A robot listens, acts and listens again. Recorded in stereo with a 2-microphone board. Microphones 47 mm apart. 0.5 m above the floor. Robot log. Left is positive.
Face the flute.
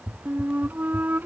note: The flute: about 45° right or 135° right.
cmd yaw -45
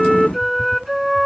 end: Facing the flute.